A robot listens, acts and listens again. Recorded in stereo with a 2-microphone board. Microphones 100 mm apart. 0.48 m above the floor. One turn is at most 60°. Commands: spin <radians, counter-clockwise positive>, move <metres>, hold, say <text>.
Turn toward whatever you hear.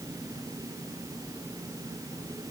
hold
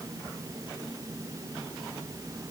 hold
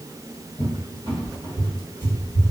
spin 0.96
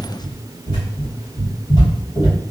spin 0.96
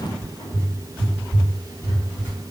spin 0.35
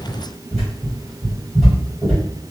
say Found it: a cupboard door, straight ahead.